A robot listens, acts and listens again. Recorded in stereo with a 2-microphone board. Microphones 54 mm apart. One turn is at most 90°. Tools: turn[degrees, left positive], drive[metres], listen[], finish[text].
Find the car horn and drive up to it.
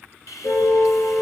Thought: The car horn: about 70° left or 110° left.
Action: turn[70]
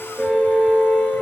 Action: drive[1.0]
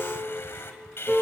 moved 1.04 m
Action: drive[1.0]
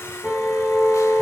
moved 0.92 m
Action: drive[1.0]
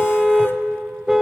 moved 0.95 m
Thought: The car horn is now 10° right.
Action: turn[-10]
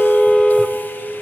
Action: drive[1.0]
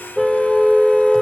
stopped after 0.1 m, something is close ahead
Action: finish[Arrived at the car horn, straight ahead.]